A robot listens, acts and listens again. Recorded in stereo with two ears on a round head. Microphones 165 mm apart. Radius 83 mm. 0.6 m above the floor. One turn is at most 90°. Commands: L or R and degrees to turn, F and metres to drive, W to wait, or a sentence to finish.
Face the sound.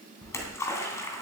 L15
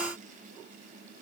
W
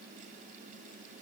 I heard a splash, but can't make it out now. It was about straight ahead or 150° left.